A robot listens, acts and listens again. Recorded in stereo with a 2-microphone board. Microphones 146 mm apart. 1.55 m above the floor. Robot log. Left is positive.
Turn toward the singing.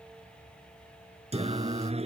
note: The singing: about 45° right or 135° right.
cmd yaw -45
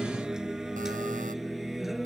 end: Facing the singing.